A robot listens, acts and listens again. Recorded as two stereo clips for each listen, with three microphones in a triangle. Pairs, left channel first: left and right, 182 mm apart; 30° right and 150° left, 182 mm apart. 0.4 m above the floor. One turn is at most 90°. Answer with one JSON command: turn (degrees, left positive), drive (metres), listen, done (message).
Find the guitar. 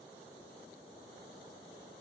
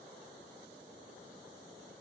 {"listen": true}
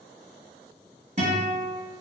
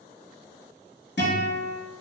{"turn": -40}
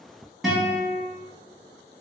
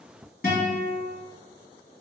{"done": "Facing the guitar, 1 to 2 m away."}